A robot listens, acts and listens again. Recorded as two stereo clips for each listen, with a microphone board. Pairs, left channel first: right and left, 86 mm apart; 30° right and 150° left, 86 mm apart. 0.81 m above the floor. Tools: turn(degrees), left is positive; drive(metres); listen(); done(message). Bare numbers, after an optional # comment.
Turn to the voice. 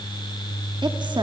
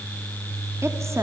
# The woman speaking: 95° left.
turn(95)
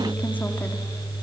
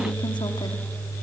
listen()
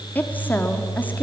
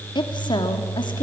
# The woman speaking is now 20° right.
turn(-20)
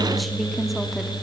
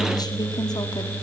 done("Found it: a woman speaking, straight ahead, 2 to 4 m away.")